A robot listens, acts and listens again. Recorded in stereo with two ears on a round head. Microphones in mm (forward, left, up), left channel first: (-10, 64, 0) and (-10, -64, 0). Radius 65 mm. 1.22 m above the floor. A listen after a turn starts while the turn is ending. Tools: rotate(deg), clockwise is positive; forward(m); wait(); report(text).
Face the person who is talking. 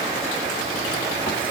wait()
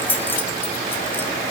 wait()
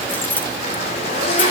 report("I can't make out anyone speaking, only a zipper and keys jangling.")